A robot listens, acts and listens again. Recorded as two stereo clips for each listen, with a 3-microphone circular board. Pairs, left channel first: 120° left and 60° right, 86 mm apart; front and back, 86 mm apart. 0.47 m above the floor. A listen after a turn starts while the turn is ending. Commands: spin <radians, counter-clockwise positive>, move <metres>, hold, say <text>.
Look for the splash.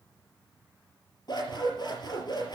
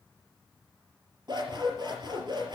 hold
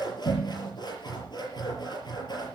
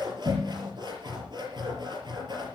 hold
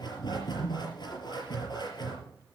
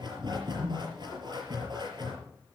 say I can't make out a splash to turn to.